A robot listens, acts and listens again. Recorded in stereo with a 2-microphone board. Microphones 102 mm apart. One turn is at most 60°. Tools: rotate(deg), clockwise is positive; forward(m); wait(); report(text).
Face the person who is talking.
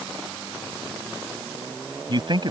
rotate(50)
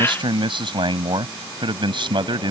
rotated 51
rotate(60)
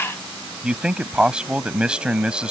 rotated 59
rotate(10)
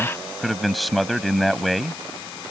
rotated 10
report("Found it: a man speaking, straight ahead.")